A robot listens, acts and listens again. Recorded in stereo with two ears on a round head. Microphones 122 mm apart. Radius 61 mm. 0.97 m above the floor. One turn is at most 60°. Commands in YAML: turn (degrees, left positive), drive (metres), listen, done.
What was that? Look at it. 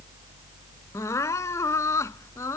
turn: 20
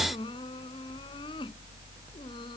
listen: true
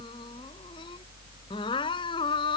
turn: 60
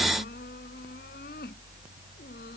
turn: 60
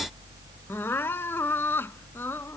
turn: 15
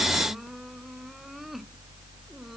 listen: true
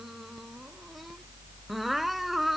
listen: true
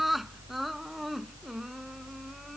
done: "Found it: crying, straight ahead."